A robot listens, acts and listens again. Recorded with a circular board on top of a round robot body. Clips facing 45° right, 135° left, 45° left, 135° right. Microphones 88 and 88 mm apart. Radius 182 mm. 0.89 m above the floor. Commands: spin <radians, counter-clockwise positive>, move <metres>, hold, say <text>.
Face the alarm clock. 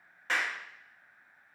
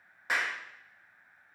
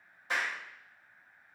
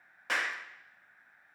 hold
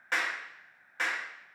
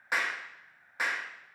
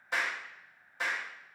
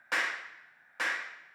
hold
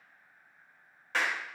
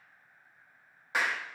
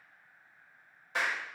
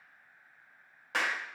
say I can't make out an alarm clock to turn to.